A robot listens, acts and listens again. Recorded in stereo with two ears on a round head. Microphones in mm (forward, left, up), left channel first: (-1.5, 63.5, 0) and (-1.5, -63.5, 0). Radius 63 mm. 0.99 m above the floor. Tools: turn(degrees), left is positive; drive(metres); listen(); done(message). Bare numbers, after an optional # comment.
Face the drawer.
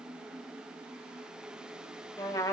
listen()
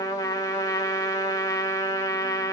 listen()
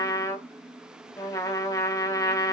done("I can't make out a drawer to turn to.")